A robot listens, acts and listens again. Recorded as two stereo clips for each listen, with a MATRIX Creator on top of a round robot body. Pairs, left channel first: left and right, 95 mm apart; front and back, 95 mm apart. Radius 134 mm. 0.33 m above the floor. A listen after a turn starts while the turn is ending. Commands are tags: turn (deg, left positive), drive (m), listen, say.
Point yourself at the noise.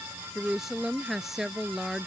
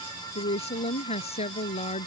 <say>Facing the woman speaking.</say>